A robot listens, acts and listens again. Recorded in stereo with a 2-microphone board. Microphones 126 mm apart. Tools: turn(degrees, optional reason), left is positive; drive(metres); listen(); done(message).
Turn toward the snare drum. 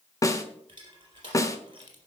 turn(degrees=25, reason="The snare drum: about 25° left or 155° left.")
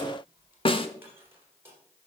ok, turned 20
turn(degrees=130, reason="So it is at 130° left.")
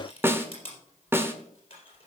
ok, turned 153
turn(degrees=-20, reason="The snare drum is now 20° right.")
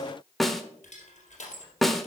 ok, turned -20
done("Found it: a snare drum, straight ahead, 1 to 2 m away.")